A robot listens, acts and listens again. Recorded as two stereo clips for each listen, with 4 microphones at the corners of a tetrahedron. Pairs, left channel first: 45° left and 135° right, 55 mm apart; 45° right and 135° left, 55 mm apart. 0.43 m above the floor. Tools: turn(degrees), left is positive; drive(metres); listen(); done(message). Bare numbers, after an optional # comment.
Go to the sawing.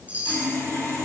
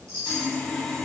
# The sawing: 35° left.
turn(35)
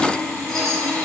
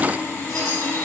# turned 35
drive(1.0)
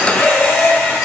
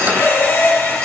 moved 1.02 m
drive(1.0)
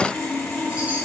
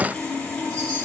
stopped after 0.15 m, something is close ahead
# The sawing is now 10° left.
turn(10)
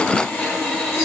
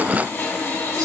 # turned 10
done("I am next to the sawing.")